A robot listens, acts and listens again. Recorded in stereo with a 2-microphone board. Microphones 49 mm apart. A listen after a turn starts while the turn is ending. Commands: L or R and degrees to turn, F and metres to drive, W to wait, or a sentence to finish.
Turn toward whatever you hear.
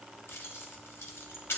L65
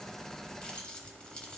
L25
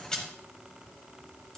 W
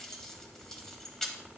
L10
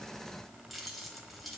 Facing the keys jangling.